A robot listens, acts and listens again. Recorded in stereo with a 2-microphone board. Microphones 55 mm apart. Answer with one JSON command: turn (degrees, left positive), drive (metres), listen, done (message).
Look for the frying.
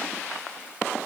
{"listen": true}
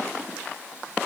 {"listen": true}
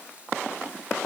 {"done": "I can't make out frying to turn to."}